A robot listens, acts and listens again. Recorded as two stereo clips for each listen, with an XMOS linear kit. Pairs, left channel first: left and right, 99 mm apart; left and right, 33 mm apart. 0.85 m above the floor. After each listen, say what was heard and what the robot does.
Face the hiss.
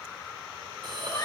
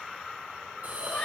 The hiss: about 50° right or 130° right. Turn 50° right.
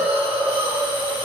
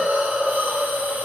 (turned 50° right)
So it is at 75° right. Turn 75° right.
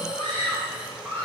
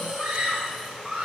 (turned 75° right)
The hiss is now 10° right. Turn 10° right.
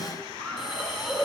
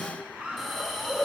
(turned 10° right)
Found it: a hiss, straight ahead, 2 to 4 m away.